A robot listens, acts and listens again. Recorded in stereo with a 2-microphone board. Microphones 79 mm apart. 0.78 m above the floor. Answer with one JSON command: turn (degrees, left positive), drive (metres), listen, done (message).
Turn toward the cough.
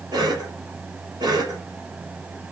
{"turn": -65}
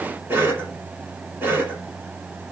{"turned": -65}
{"turn": -30}
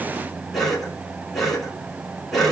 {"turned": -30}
{"done": "Found it: a cough, straight ahead."}